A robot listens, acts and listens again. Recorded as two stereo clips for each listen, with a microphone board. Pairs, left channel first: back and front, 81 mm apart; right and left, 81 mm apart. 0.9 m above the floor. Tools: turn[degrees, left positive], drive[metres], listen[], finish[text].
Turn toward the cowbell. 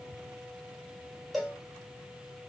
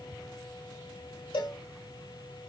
Thought: The cowbell: 90° right.
Action: turn[-90]
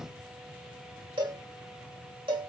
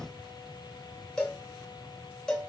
Thought: The cowbell is now 10° right.
Action: turn[-10]
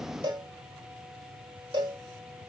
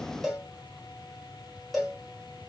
Action: finish[Facing the cowbell.]